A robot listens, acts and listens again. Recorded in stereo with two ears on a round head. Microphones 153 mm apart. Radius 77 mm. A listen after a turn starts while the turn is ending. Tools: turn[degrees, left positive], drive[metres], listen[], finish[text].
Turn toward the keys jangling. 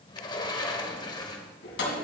Action: turn[90]
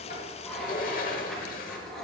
Action: finish[Found it: keys jangling, straight ahead, 2 to 4 m away.]